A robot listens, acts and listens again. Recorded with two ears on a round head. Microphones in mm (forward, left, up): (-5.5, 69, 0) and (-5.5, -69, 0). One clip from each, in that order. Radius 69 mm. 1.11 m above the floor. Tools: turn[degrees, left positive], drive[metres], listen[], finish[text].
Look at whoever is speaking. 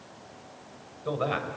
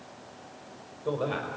Action: turn[30]
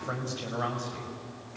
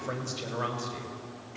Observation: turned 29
Thought: So it is at 25° right.
Action: turn[-25]
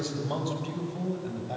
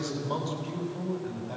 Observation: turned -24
Action: finish[Facing the man speaking.]